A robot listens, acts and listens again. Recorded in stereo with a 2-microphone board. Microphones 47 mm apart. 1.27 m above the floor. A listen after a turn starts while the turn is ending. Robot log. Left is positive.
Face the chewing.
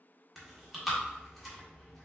cmd yaw -30
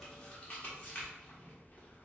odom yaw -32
note: So it is at 30° left.
cmd yaw +30
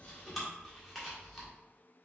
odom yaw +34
end: Facing the chewing, 1 to 2 m away.